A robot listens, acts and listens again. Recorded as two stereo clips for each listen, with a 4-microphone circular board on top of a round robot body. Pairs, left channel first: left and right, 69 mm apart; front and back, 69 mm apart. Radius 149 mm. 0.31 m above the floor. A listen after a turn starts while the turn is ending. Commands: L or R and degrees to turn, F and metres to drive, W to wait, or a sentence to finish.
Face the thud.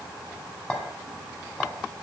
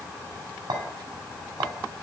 W
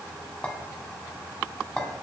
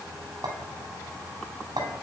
W
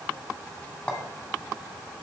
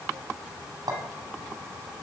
I can't make out a thud to turn to.